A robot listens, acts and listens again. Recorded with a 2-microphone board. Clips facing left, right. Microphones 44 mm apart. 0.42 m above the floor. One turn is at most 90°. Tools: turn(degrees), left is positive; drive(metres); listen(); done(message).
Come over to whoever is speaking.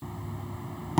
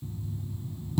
listen()
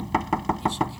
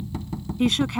turn(degrees=-65)
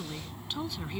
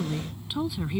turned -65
turn(degrees=-10)
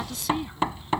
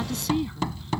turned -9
drive(metres=1.0)
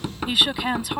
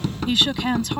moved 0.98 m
turn(degrees=10)
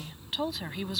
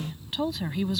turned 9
drive(metres=1.0)
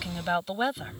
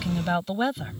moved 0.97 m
drive(metres=1.0)
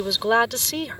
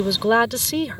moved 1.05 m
drive(metres=1.0)
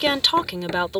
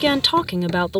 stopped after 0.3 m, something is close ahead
done("I am next to the woman speaking.")